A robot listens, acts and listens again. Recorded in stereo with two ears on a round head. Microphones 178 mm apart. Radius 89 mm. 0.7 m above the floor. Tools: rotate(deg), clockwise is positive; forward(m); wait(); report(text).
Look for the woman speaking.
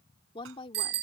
rotate(-25)
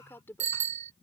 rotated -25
rotate(-30)
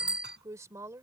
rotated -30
rotate(15)
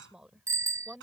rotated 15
report("Facing the woman speaking.")